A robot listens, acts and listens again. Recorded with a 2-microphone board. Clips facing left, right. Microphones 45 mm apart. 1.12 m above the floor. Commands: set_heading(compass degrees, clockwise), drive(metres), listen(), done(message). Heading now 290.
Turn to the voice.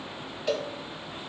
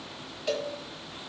listen()
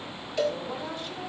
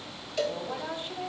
set_heading(315)
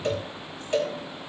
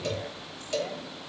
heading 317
listen()
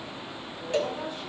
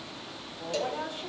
set_heading(82)
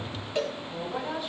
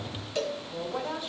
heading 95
set_heading(85)
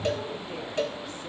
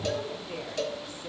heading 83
done("Found it: a woman speaking, straight ahead, 2 to 4 m away.")